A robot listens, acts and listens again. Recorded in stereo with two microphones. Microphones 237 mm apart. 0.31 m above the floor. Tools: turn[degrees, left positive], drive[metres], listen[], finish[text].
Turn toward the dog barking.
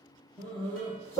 Action: turn[30]
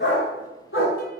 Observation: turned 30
Thought: So it is at 120° left.
Action: turn[120]
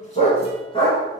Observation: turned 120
Thought: The dog barking is now 20° left.
Action: turn[20]
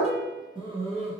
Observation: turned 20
Thought: The dog barking is now 30° right.
Action: turn[-30]
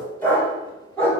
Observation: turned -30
Action: finish[Facing the dog barking, 1 to 2 m away.]